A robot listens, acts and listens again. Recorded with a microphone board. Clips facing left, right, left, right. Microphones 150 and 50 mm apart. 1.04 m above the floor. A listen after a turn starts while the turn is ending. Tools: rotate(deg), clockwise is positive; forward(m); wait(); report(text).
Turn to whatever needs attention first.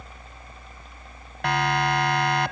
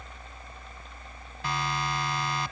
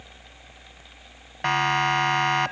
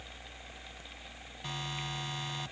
rotate(-70)
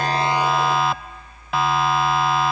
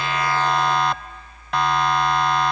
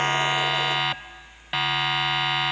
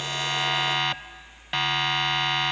report("Found it: a siren, straight ahead.")